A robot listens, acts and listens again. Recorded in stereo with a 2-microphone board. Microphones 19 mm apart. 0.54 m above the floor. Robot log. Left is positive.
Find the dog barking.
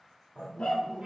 cmd yaw +90
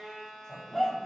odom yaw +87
note: So it is at 10° right.
cmd yaw -10
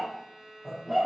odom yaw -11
note: The dog barking is now 15° right.
cmd yaw -15
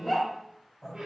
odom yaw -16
note: The dog barking is now 15° right.
cmd yaw -15
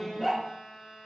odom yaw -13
note: The dog barking is now 10° right.
cmd yaw -10
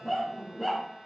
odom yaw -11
note: The dog barking is now 15° right.
cmd yaw -15
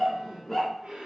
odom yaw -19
end: Facing the dog barking.